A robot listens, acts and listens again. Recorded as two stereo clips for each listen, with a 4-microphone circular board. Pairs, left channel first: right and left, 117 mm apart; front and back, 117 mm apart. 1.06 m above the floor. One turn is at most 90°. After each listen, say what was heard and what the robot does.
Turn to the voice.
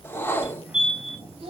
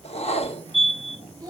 The child speaking: 125° left. Turn 90° left.
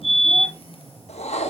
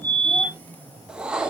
Nothing new. It was at 35° left. Turn 35° left.
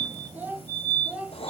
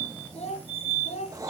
The child speaking is now 10° left. Turn 10° left.
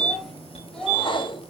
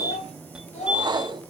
Facing the child speaking.